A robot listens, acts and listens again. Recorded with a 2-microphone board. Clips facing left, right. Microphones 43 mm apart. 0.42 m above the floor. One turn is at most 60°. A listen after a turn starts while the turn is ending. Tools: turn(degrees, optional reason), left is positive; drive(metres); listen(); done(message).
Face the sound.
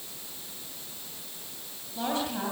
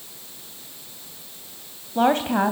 turn(degrees=-50, reason="The woman speaking: about 50° right or 130° right.")
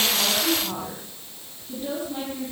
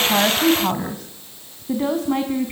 turn(degrees=-60, reason="So it is at 60° right.")
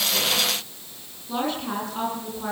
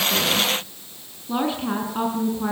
turn(degrees=-15, reason="The woman speaking is now 15° right.")
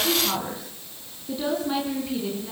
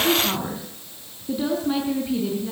done("Facing the woman speaking.")